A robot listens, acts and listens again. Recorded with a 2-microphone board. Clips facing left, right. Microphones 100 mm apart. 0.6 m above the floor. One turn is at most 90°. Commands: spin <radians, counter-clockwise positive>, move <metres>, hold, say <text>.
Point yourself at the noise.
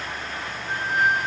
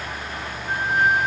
spin -0.87
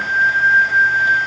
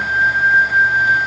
say Facing the flute, 2 to 4 m away.